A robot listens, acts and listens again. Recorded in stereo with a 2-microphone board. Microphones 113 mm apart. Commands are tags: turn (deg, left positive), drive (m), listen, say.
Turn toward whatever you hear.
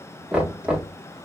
<turn deg="-30"/>
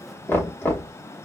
<turn deg="20"/>
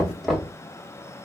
<say>Facing the knocking.</say>